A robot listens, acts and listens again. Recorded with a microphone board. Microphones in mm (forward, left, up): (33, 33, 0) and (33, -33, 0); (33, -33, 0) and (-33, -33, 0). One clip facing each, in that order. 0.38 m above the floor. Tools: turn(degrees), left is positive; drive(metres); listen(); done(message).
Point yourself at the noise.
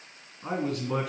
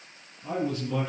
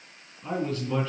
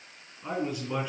turn(degrees=100)
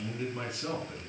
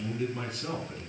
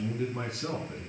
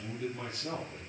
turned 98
done("Facing the man speaking, 2 to 4 m away.")